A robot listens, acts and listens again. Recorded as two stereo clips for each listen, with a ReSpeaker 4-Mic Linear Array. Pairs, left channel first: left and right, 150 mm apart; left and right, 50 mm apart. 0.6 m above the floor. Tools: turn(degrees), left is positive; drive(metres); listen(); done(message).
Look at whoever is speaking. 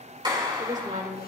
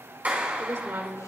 turn(degrees=-60)
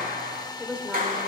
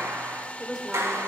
turn(degrees=-10)
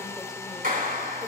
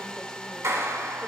listen()
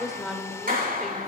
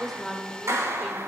done("Facing the woman speaking.")